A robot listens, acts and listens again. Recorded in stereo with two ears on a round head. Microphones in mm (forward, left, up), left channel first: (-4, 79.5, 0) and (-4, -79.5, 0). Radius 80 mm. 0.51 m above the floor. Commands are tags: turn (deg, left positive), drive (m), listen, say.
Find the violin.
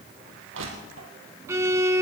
<turn deg="-15"/>
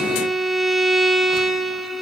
<say>Found it: a violin, straight ahead.</say>